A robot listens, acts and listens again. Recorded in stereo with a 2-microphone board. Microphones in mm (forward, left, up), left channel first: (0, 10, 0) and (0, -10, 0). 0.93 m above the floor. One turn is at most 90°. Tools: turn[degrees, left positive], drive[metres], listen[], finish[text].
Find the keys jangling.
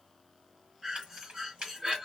Action: turn[-90]
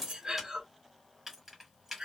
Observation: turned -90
Thought: So it is at 10° right.
Action: turn[-10]
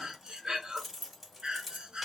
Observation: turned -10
Action: finish[Facing the keys jangling.]